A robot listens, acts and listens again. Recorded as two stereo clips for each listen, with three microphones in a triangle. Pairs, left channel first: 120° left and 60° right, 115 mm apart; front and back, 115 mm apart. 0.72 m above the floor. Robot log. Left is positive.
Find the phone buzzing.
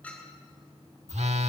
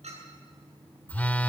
note: The phone buzzing: 75° right.
cmd yaw -75
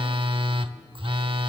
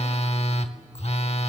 note: The phone buzzing is now 20° right.
cmd yaw -20
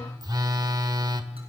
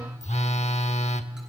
note: The phone buzzing is now 10° right.
cmd yaw -10
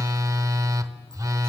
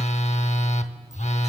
end: Facing the phone buzzing, under 1 m away.